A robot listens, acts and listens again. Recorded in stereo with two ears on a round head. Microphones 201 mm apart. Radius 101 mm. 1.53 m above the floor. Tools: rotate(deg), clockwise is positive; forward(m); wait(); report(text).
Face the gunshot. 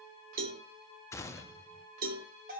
rotate(-30)
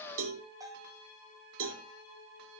wait()
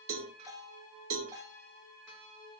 report("I heard a gunshot, but can't make it out now. It was about 15° right or 135° left.")